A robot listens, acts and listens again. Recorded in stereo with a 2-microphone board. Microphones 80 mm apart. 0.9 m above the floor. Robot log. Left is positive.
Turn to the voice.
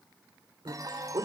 cmd yaw -90
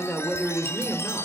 end: Facing the man speaking, 2 to 4 m away.